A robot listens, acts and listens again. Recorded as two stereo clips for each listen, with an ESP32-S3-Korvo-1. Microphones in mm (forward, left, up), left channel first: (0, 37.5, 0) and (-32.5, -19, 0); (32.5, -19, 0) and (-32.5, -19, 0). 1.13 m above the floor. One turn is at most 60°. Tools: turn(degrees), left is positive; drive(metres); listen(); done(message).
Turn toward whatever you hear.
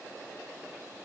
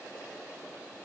listen()
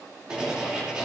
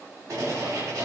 turn(degrees=60)
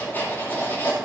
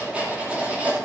turn(degrees=60)
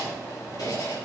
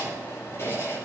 turn(degrees=45)
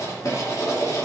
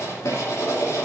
turn(degrees=35)
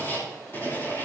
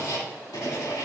done("Found it: writing, straight ahead.")